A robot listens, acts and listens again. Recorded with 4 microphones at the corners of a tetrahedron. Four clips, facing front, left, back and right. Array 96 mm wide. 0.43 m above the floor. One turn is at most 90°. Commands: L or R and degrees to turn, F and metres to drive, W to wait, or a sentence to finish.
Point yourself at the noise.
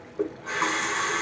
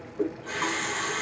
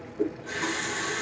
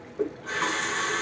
Facing the running tap, 1 to 2 m away.